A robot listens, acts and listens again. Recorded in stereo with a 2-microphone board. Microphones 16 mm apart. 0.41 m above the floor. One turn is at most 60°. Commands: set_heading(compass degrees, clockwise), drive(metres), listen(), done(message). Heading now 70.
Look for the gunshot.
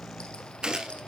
set_heading(125)
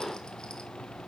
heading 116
listen()
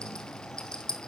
done("I heard a gunshot, but can't make it out now. It was about 10° right or 80° right.")